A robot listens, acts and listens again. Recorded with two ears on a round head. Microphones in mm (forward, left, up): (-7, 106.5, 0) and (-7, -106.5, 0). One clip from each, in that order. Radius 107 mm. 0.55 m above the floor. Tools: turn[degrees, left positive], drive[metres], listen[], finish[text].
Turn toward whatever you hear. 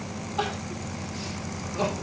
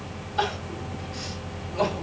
Thought: The crying: about 35° right or 145° right.
Action: turn[-35]
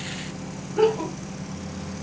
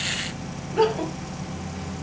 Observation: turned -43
Thought: So it is at 100° right.
Action: turn[-100]
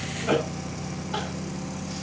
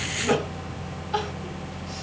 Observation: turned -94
Action: finish[Facing the crying, 2 to 4 m away.]